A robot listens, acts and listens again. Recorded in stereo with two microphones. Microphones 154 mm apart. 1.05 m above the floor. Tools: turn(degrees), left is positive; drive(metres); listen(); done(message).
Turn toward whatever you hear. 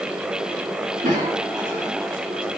turn(degrees=-60)
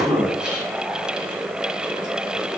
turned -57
done("Found it: a cough, straight ahead, 1 to 2 m away.")